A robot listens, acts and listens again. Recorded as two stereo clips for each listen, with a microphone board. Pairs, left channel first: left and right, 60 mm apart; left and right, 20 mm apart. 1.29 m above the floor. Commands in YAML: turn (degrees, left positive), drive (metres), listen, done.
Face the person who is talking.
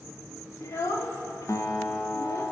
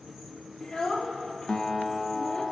turn: 60
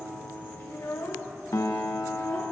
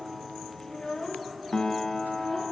turn: 65
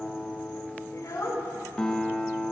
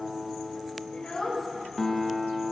turn: 55
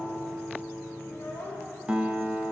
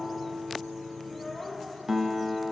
turn: 25
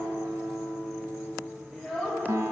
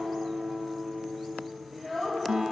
done: "Facing the child speaking."